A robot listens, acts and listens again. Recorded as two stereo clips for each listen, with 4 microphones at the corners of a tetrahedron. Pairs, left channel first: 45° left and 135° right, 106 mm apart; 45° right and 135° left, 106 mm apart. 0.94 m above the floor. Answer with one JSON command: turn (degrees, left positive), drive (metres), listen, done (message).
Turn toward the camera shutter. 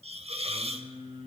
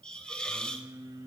{"listen": true}
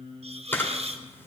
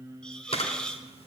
{"turn": -25}
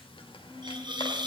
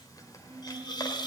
{"listen": true}
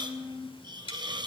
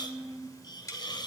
{"listen": true}
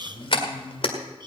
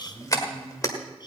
{"turn": 10}
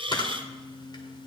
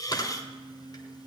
{"done": "Found it: a camera shutter, straight ahead, 1 to 2 m away."}